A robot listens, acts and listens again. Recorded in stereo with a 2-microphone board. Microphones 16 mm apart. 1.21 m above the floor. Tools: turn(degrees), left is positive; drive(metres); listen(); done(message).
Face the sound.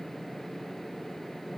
listen()
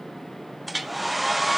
turn(degrees=-30)
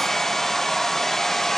turn(degrees=25)
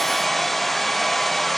turn(degrees=10)
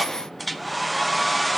done("Found it: a hair dryer, straight ahead, under 1 m away.")